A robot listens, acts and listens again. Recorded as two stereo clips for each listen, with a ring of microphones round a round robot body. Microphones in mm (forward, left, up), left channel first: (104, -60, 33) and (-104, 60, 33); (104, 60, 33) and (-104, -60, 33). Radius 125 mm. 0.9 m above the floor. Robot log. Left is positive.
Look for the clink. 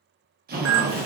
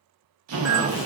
note: The clink: 135° left.
cmd yaw +135
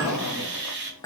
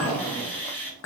note: The clink is now 45° left.
cmd yaw +45
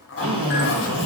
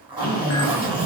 cmd idle
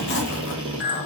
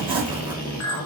note: The clink is now 15° left.
cmd yaw +15
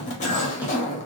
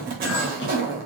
cmd idle
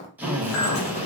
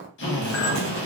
end: Found it: a clink, straight ahead, under 1 m away.